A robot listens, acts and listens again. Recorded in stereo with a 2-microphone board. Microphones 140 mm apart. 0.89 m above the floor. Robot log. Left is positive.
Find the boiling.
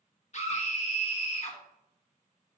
cmd idle
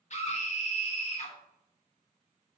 cmd idle
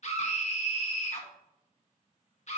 end: I can't make out boiling, only a scream.